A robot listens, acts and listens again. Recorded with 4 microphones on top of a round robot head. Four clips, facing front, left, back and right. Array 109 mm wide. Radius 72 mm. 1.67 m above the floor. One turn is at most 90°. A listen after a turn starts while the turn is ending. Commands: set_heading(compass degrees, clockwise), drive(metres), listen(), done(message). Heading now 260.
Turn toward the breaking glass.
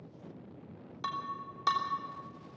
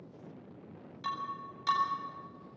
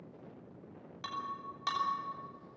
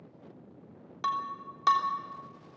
set_heading(340)
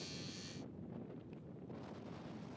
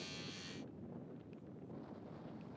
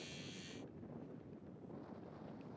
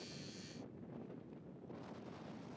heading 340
done("I heard breaking glass from this way, but can't make it out now.")